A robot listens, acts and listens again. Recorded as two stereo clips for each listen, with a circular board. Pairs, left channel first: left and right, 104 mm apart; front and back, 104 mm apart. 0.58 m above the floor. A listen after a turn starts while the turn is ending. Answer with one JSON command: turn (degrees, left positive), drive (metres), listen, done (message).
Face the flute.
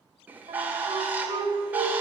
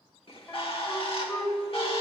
{"turn": -70}
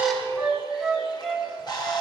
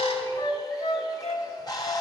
{"done": "Facing the flute, 1 to 2 m away."}